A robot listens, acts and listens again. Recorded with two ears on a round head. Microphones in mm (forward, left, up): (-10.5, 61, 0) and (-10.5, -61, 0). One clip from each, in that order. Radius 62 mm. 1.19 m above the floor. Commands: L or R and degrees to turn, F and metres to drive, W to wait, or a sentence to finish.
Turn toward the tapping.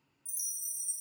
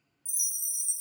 W
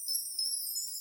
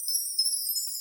W
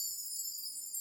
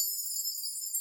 I can't make out tapping to turn to.